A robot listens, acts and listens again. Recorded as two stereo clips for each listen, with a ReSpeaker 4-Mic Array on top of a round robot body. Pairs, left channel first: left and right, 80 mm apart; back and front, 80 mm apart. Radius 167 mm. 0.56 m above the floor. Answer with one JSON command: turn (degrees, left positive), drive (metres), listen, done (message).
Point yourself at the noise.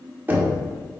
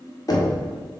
{"turn": -150}
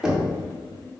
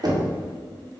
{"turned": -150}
{"done": "Found it: knocking, straight ahead."}